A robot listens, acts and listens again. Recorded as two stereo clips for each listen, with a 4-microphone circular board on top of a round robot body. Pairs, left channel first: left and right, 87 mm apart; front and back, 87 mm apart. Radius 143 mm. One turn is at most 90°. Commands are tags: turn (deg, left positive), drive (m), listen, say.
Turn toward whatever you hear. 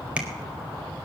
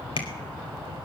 <turn deg="-15"/>
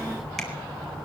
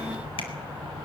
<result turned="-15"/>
<listen/>
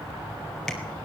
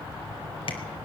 <say>Found it: tapping, straight ahead, over 4 m away.</say>